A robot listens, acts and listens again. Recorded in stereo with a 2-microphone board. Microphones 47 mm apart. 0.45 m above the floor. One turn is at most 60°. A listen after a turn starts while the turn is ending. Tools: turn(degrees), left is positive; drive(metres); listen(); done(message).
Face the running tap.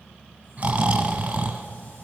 listen()
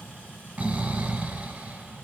listen()
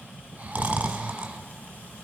done("I can't make out a running tap to turn to.")